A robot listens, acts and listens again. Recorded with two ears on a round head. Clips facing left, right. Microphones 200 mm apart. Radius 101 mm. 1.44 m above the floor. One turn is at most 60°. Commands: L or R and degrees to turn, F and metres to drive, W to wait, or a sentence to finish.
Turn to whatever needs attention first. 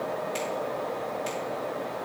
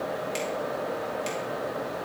W
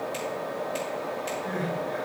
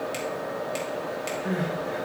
R60
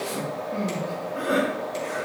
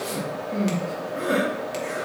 R30
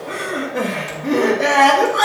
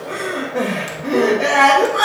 Facing the crying.